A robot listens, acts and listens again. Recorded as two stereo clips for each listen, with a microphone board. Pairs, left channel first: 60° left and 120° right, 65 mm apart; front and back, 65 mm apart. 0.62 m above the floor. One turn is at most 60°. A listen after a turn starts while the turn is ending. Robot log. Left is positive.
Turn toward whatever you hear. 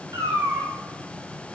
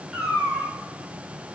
note: The cat meowing: 95° right.
cmd yaw -60
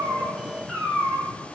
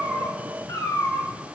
note: The cat meowing is now 25° right.
cmd yaw -25
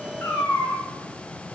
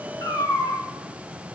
end: Facing the cat meowing.